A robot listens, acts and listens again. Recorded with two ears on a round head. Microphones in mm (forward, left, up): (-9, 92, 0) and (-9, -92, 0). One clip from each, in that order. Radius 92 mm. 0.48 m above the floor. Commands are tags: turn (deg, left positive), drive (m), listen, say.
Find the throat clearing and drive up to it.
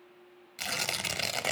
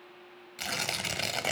<listen/>
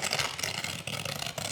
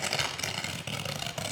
<listen/>
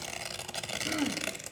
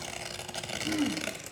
<turn deg="70"/>
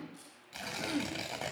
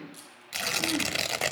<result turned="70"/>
<turn deg="30"/>
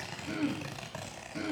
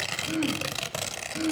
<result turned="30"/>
<drive m="1.0"/>
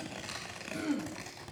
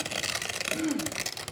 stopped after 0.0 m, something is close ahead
<say>Something is in my way. I am facing the throat clearing but have not reached it.</say>